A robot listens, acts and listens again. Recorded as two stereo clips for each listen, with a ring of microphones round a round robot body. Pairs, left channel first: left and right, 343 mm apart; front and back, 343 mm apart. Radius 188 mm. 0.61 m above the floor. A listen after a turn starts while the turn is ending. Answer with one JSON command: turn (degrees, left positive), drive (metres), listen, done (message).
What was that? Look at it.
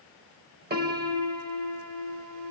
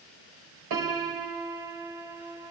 {"turn": -150}
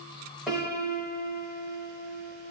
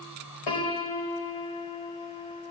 {"done": "Found it: a piano, straight ahead."}